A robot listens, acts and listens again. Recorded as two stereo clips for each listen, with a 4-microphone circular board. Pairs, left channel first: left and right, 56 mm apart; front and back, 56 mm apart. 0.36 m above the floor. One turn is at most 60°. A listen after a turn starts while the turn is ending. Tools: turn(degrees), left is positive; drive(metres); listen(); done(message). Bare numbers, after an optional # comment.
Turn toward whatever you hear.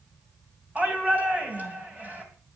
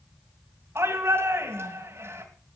# The shout: 150° right.
turn(-60)
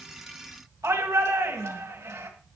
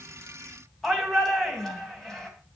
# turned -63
# The shout is now 85° right.
turn(-60)
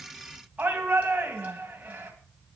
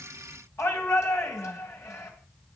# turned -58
# The shout is now 30° right.
turn(-30)
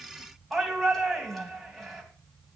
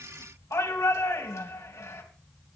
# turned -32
done("Facing the shout.")